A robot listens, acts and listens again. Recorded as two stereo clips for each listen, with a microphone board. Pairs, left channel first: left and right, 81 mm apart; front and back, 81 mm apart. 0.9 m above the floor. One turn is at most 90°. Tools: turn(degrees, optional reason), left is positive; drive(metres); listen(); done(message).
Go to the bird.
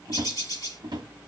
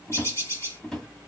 turn(degrees=55, reason="The bird: 55° left.")
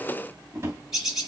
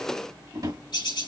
drive(metres=1.0)
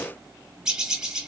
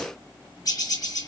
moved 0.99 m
turn(degrees=-15, reason="The bird is now 15° right.")
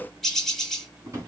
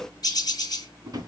drive(metres=1.0)
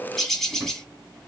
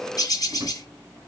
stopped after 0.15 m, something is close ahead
done("Arrived at the bird, straight ahead.")